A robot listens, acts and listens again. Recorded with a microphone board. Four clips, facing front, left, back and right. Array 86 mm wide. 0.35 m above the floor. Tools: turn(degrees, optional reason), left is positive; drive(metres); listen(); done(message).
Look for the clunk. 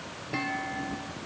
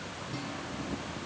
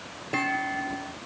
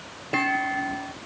turn(degrees=-105, reason="The clunk: 105° right.")
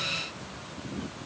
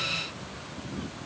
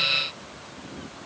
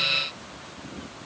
done("I heard a clunk from this way, but can't make it out now.")